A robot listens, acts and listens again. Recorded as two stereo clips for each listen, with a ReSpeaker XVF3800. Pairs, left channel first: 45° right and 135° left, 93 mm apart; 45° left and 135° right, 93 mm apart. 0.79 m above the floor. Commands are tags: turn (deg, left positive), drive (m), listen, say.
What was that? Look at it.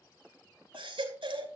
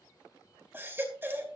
<turn deg="155"/>
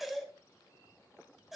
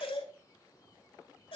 <turn deg="45"/>
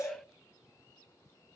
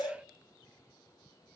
<say>Found it: a baby crying, straight ahead.</say>